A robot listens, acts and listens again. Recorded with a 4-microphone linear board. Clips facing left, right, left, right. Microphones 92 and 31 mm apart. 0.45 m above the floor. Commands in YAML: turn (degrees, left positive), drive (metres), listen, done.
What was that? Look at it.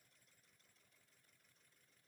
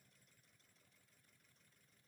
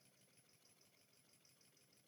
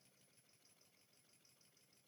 listen: true
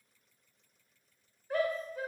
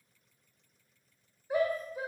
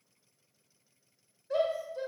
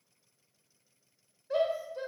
turn: -30
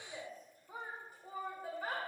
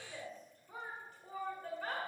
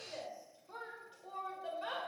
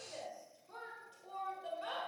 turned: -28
turn: 15
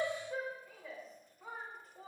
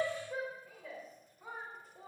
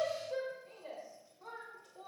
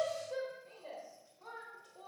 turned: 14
done: "Found it: a shout, straight ahead."